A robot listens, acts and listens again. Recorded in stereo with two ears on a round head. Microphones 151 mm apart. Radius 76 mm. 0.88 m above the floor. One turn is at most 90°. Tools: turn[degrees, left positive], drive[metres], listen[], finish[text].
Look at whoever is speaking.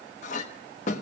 Action: listen[]
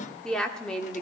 Action: turn[30]
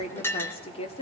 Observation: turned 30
Thought: So it is at 140° left.
Action: turn[90]
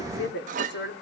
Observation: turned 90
Thought: The woman speaking is now 75° left.
Action: turn[75]
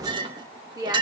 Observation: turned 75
Thought: The woman speaking is now 20° right.
Action: turn[-20]
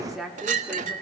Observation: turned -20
Action: finish[Found it: a woman speaking, straight ahead.]